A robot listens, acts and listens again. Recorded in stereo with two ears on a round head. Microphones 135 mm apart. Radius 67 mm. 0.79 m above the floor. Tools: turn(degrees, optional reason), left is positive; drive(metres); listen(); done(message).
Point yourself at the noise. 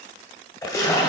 turn(degrees=25, reason="The splash: about 25° left or 155° left.")
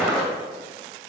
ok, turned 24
done("Facing the splash.")